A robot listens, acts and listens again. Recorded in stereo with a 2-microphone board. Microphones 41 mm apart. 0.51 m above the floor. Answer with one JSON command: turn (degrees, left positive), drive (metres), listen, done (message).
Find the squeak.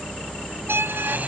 {"turn": -90}
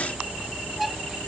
{"listen": true}
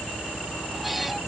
{"listen": true}
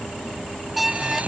{"done": "Found it: a squeak, straight ahead."}